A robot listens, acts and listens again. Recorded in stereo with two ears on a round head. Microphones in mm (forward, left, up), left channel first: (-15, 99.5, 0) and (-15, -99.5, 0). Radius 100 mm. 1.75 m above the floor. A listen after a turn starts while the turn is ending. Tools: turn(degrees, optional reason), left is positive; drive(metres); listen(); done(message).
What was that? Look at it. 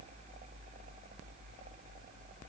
listen()
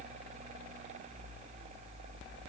listen()
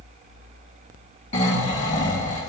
turn(degrees=35, reason="The snoring: about 35° left or 145° left.")
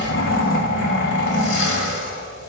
turn(degrees=110, reason="So it is at 110° left.")
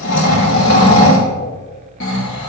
turn(degrees=55, reason="The snoring is now 55° left.")
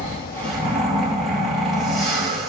done("Facing the snoring.")